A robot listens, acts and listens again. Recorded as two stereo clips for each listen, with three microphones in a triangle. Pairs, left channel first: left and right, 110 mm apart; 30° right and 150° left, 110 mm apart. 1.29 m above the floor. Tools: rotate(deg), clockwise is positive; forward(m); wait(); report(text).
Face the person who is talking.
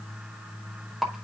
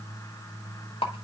wait()
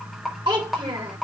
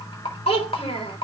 rotate(45)
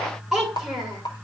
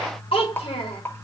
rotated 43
report("Facing the child speaking.")